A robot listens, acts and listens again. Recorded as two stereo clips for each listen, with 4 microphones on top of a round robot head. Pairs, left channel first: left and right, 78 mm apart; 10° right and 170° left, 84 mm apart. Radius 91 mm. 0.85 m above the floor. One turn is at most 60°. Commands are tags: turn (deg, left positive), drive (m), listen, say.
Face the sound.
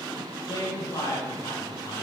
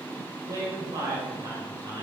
<turn deg="60"/>
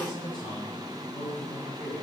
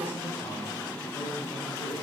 <turn deg="60"/>
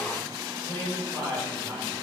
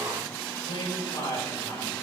<turn deg="20"/>
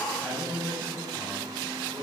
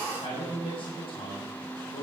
<turn deg="10"/>
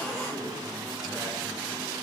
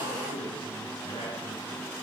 <listen/>
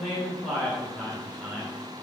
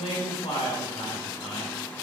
<say>Found it: a man speaking, straight ahead.</say>